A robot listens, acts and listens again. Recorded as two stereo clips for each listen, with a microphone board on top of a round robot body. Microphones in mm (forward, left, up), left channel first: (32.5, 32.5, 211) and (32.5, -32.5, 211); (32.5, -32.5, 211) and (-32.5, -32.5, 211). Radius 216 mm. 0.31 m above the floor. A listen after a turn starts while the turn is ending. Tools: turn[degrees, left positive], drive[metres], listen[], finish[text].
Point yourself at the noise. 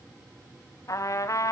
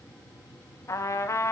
Thought: The trumpet: 50° left.
Action: turn[50]
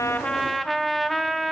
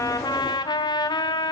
Action: finish[Found it: a trumpet, straight ahead, 1 to 2 m away.]